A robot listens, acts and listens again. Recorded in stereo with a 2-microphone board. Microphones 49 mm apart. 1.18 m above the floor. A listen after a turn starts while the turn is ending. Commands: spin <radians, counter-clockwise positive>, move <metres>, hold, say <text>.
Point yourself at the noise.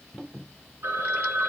spin -1.05
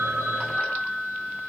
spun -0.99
say Found it: a phone ringing, straight ahead, 2 to 4 m away.